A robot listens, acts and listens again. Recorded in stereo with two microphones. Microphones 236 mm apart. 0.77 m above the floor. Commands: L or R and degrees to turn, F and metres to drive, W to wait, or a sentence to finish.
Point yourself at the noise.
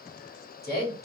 L40
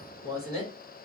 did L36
L90
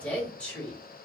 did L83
Facing the woman speaking.